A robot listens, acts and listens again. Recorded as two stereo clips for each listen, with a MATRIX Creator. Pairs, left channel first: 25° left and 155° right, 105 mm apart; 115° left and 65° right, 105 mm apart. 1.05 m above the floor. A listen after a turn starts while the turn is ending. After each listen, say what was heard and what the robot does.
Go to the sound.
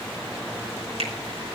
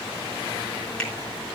The finger snap: 170° right. Turn 170° right.
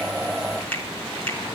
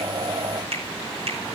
The finger snap is now 50° right. Turn 50° right.
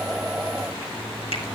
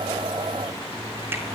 Keep listening.
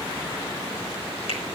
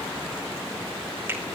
Keep listening.
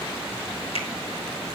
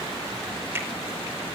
Drive 1.0 m forward.
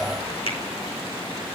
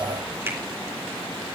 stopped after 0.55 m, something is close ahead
Blocked. The finger snap is further on, straight ahead.